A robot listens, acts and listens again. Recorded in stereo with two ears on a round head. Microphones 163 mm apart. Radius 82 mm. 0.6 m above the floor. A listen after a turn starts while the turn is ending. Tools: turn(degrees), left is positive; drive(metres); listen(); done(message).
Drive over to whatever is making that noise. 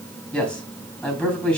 turn(degrees=30)
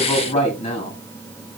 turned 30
turn(degrees=145)
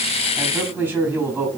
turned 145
turn(degrees=-10)
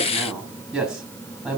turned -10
drive(metres=1.0)
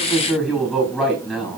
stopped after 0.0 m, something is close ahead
done("Blocked. The man speaking is further on, straight ahead.")